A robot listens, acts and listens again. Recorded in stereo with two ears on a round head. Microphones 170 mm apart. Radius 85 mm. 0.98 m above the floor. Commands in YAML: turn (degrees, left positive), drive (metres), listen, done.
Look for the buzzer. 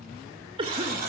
turn: -50
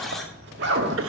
done: "Facing the buzzer."